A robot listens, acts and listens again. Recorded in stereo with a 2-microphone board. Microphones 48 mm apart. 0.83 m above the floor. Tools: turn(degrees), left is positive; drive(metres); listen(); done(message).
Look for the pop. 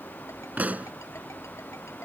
turn(degrees=-30)
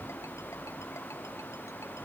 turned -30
listen()
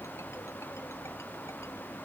done("I heard a pop, but can't make it out now. It was about straight ahead or 120° right.")